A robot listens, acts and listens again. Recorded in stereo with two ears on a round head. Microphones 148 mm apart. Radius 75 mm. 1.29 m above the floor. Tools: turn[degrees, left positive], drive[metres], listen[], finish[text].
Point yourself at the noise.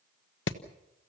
Action: turn[90]
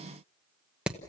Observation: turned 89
Action: finish[Found it: hammering, straight ahead, 1 to 2 m away.]